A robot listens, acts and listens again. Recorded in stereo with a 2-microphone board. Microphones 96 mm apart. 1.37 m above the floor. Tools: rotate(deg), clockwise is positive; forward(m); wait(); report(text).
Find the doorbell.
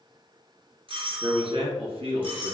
rotate(65)
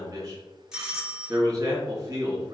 report("Facing the doorbell.")